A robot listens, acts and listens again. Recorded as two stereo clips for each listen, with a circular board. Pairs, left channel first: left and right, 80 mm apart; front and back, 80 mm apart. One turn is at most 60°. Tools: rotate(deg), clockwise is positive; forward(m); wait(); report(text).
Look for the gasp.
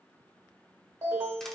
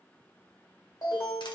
wait()
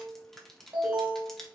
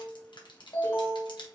wait()
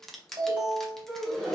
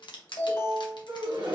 rotate(-60)
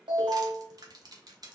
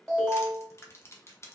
rotate(-60)
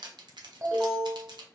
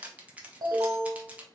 rotate(-50)
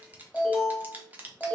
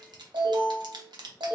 report("I heard a gasp from this way, but can't make it out now.")